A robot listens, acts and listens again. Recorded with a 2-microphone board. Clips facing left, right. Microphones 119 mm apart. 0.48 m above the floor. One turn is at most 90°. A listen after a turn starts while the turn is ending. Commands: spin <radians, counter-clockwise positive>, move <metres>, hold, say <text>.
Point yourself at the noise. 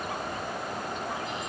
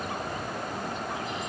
hold
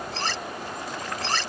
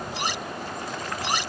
spin -0.52
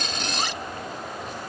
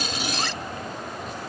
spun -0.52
hold
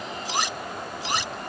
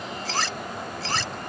spin 0.26
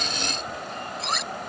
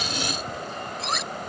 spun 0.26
say Facing the cutlery clinking.